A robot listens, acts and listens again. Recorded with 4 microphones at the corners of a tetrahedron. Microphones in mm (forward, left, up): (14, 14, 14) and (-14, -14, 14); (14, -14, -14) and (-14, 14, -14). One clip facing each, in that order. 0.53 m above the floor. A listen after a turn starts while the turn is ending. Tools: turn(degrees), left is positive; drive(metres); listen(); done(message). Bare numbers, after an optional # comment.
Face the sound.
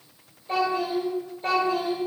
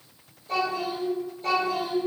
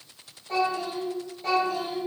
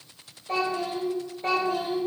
# The child speaking: 90° left.
turn(90)
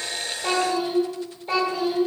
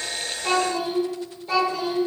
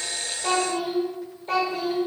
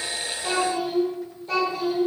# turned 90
# The child speaking is now 15° right.
turn(-15)
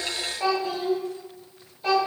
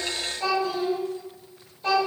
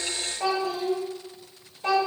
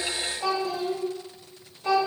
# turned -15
# The child speaking is now 35° right.
turn(-35)
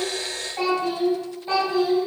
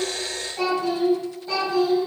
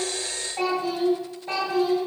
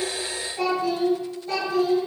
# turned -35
# The child speaking is now 10° right.
turn(-10)
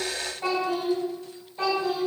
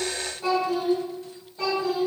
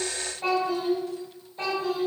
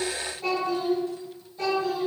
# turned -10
done("Facing the child speaking, 1 to 2 m away.")